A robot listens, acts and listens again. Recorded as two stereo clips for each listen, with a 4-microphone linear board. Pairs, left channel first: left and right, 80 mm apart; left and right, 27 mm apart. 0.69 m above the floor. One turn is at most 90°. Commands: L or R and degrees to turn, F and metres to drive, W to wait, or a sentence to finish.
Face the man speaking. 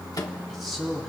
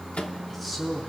L30
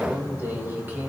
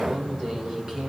R25
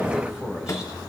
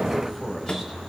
R10
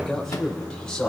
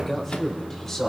L10
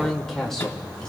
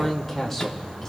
L10
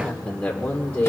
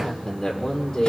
L20
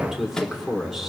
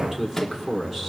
Facing the man speaking, 1 to 2 m away.